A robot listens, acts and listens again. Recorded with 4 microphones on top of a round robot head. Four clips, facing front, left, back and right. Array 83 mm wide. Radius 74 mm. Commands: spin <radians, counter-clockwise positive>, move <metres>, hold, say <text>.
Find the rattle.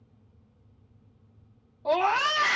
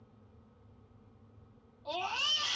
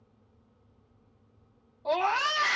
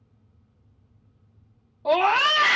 hold
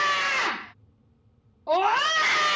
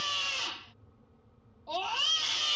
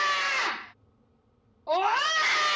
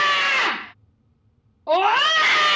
hold
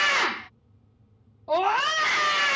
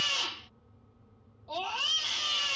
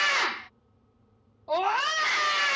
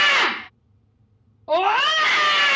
say I can't make out a rattle, only a scream.